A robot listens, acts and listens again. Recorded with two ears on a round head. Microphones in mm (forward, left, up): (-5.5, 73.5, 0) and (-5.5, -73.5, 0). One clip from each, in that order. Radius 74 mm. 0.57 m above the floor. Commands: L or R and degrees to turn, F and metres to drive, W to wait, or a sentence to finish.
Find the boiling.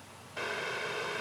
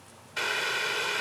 R60
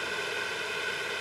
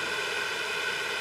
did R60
R15
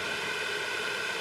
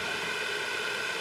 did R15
Found it: boiling, straight ahead.